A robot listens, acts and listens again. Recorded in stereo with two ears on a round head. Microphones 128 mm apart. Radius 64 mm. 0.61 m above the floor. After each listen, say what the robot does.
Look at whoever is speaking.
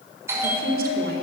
Turn 70° right.
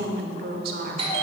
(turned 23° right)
Turn 80° right.
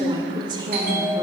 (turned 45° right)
Turn 30° right.
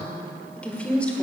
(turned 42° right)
Turn 10° left.
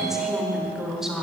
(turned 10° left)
Found it: a woman speaking, straight ahead.